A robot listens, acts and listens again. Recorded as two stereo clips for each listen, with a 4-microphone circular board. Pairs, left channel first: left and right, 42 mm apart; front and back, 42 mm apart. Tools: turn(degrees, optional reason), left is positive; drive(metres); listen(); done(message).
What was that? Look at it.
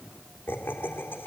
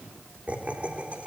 turn(degrees=120, reason="The laughter: 120° left.")
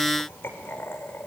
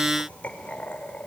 turn(degrees=60, reason="The laughter is now 60° left.")
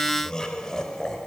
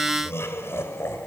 turn(degrees=15, reason="The laughter is now 15° left.")
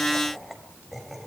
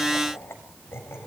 done("Found it: laughter, straight ahead.")